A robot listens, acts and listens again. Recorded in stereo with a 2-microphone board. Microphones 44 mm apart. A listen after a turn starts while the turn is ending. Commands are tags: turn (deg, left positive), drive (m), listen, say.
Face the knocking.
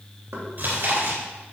<turn deg="-90"/>
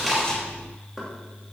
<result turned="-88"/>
<say>Facing the knocking, 2 to 4 m away.</say>